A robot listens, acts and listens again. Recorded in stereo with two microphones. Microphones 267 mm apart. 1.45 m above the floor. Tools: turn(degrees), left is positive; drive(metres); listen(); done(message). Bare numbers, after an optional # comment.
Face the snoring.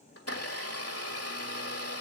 listen()
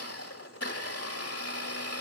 listen()
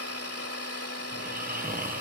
# The snoring: about 35° right or 145° right.
turn(-35)
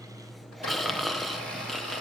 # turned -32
done("Found it: snoring, straight ahead.")